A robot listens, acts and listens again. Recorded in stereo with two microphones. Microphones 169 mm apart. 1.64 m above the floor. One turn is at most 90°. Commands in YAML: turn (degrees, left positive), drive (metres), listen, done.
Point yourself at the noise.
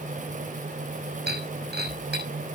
turn: -90
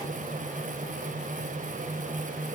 done: "I heard breaking glass from this way, but can't make it out now."